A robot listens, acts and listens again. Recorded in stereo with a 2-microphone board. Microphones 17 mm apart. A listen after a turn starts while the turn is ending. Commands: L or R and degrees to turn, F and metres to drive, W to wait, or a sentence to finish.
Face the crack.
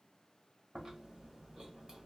W
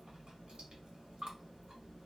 W
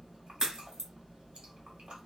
R40
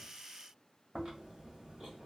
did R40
W
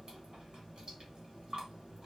I heard a crack, but can't make it out now. It was about straight ahead or 100° right.